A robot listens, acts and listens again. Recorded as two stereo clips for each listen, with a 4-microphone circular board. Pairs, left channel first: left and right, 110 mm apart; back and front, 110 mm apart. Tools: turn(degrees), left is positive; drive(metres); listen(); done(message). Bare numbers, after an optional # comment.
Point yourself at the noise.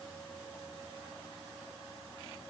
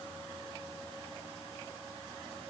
listen()
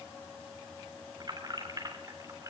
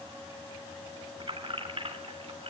# The keys jangling: 30° right.
turn(-30)
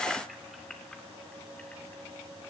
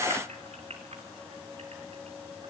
done("Found it: keys jangling, straight ahead.")